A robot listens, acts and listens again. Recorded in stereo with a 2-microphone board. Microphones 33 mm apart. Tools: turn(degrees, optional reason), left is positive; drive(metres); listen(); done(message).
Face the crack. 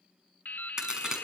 turn(degrees=-20, reason="The crack: about 20° right or 160° right.")
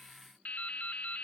listen()
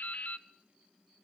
done("I heard a crack, but can't make it out now. It was about straight ahead or 140° right.")